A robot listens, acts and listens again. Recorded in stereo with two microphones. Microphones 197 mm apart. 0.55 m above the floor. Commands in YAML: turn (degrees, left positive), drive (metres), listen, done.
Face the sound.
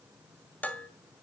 turn: 30
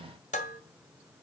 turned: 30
turn: 140
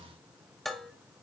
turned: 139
done: "Facing the dishes clattering."